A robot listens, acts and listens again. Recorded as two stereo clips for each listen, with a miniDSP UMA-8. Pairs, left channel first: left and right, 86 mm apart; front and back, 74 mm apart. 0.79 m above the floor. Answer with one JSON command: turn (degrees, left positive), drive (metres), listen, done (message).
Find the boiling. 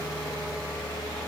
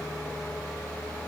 {"listen": true}
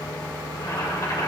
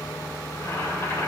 {"turn": 50}
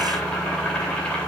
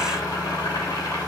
{"turn": 10}
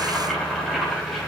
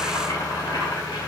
{"done": "Facing the boiling, 2 to 4 m away."}